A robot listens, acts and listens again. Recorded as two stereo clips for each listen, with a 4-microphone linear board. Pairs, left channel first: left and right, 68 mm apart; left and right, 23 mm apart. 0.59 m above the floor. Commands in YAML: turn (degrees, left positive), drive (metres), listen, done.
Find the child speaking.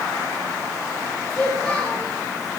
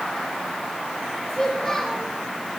turn: 30
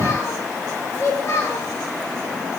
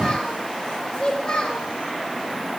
turn: 140
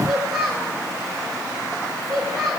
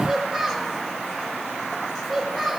done: "Found it: a child speaking, straight ahead."